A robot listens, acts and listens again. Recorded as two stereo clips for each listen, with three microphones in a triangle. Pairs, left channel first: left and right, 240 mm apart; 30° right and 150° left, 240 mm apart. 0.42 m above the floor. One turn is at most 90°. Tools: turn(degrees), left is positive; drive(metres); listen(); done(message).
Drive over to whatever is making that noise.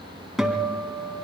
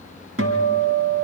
turn(degrees=90)
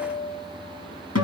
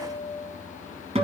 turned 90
turn(degrees=85)
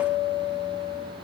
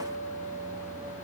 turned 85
drive(metres=1.0)
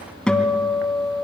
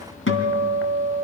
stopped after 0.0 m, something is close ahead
done("Something is in my way. I am facing the guitar but have not reached it.")